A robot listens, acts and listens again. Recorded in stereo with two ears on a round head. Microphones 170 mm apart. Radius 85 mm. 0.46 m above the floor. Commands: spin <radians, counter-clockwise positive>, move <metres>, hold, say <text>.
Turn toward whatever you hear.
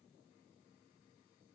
hold
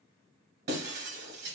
spin -1.05
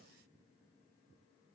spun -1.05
hold
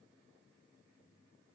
say I heard breaking glass, but can't make it out now. It was about straight ahead or 60° right.